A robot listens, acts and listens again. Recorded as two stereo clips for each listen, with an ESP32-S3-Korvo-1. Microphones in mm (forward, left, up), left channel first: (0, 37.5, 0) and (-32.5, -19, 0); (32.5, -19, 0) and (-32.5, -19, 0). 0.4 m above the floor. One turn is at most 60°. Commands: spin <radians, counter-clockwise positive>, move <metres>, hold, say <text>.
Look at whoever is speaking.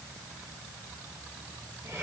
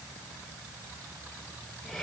hold
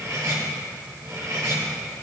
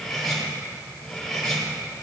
hold
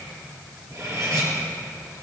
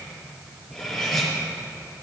say I can't make out anyone speaking to turn to.